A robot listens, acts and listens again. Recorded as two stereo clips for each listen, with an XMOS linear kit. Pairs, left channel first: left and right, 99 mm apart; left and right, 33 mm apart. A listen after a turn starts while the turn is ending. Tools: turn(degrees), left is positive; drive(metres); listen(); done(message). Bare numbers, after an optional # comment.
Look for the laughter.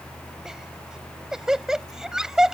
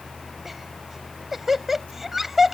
turn(-30)
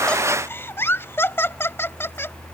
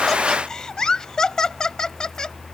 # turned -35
# So it is at 25° left.
turn(25)
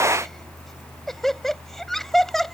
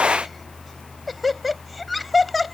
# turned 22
done("Facing the laughter.")